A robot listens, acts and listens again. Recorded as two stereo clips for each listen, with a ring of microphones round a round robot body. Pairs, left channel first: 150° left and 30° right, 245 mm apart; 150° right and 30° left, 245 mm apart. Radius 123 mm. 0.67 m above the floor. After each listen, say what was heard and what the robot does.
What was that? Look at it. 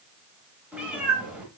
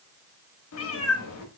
The cat meowing: 115° right. Turn 115° right.
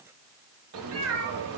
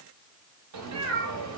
Facing the cat meowing.